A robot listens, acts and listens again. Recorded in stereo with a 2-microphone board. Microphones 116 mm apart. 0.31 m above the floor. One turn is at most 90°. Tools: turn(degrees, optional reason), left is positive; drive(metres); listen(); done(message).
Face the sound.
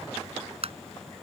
turn(degrees=-60, reason="The tapping: about 60° right or 120° right.")
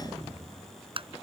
turn(degrees=-55, reason="So it is at 55° right.")
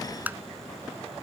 turn(degrees=-15, reason="The tapping is now 15° right.")
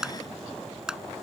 done("Found it: tapping, straight ahead.")